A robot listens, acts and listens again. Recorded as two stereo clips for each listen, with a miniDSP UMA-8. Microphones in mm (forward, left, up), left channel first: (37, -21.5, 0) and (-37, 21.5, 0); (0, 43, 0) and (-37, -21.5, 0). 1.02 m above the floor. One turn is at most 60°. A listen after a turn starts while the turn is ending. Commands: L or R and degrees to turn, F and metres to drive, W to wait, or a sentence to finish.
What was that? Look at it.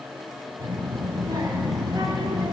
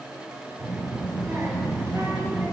R60
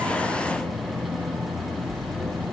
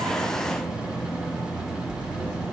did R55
R60
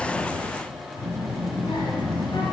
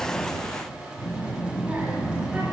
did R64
R50
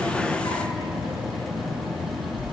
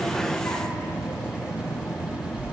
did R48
Facing the child speaking, 1 to 2 m away.